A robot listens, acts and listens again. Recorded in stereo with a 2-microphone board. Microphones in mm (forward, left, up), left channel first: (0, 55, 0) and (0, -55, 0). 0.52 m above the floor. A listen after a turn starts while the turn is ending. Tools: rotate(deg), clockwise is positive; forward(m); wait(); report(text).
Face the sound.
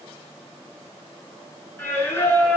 rotate(-20)
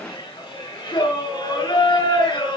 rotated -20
rotate(-140)
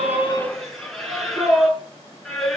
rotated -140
report("Facing the singing.")